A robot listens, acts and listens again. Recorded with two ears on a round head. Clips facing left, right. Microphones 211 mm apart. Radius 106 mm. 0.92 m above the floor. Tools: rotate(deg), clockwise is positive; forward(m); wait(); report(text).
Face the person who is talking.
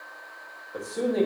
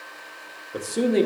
rotate(40)
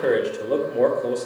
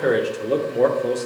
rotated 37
report("Facing the man speaking, 1 to 2 m away.")